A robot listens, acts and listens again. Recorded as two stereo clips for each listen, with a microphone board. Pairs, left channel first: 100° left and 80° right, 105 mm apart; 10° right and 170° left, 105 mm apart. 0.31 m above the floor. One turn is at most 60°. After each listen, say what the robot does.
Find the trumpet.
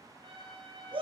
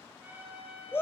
Turn 60° right.
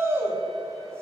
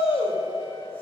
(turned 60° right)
Turn 55° right.
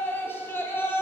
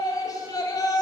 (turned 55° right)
Keep listening.
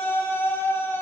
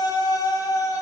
Facing where the trumpet came from. I can't hear it now.